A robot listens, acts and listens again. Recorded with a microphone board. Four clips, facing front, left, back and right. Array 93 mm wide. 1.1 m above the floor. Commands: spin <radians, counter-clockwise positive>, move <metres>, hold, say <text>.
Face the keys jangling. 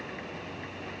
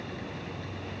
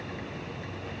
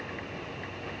hold
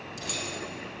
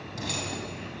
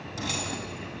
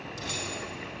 spin 2.53
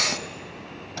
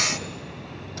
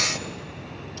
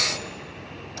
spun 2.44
hold
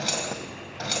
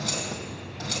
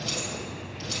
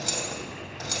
spin -0.17
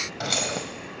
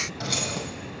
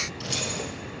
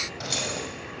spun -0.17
say Found it: keys jangling, straight ahead, 2 to 4 m away.